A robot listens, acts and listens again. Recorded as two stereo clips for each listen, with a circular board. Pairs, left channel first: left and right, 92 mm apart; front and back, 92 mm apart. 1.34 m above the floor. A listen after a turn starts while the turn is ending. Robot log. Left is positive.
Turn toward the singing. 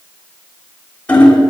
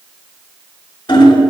cmd idle
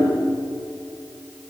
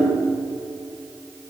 cmd idle
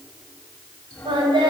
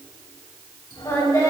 note: The singing: 55° right.
cmd yaw -55
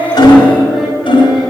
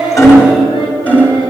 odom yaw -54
cmd idle
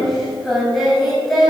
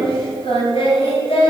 end: Facing the singing, over 4 m away.